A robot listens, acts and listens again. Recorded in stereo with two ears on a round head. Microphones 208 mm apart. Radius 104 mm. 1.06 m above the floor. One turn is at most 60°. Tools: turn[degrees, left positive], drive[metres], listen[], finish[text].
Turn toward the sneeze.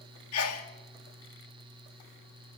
Thought: The sneeze: about 70° left or 110° left.
Action: turn[60]
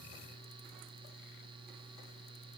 Action: listen[]
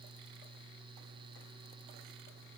Action: finish[I heard a sneeze, but can't make it out now. It was about 10° left or 50° left.]